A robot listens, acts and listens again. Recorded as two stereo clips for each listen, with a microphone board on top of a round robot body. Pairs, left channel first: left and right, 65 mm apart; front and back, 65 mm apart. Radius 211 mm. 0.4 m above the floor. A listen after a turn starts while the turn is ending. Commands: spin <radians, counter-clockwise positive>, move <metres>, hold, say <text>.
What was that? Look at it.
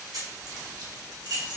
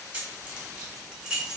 spin -1.75
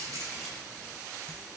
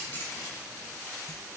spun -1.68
hold
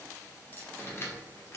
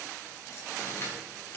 spin 0.70
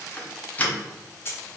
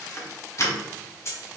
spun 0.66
spin 0.70
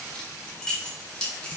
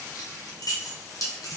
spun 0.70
spin 0.26
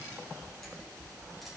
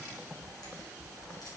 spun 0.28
hold
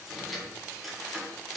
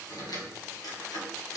say Facing the keys jangling.